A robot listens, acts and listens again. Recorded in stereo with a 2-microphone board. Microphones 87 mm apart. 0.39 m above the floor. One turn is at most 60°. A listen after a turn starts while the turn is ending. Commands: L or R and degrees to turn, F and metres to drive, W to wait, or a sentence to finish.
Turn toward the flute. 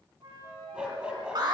R60
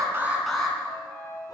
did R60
R45
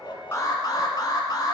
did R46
W
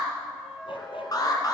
Found it: a flute, straight ahead, 2 to 4 m away.